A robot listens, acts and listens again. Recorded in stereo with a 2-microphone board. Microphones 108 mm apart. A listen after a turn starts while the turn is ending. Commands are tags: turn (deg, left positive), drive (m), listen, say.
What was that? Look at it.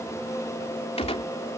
<turn deg="70"/>
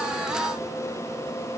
<listen/>
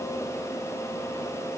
<say>I heard a gunshot, but can't make it out now. It was about straight ahead or 40° left.</say>